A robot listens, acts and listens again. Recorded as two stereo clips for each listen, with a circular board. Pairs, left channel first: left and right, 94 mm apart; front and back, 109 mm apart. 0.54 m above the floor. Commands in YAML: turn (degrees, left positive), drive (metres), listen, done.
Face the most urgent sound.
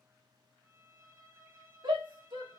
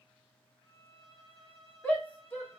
turn: -75
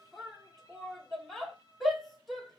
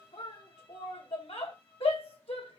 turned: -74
done: "Found it: a shout, straight ahead."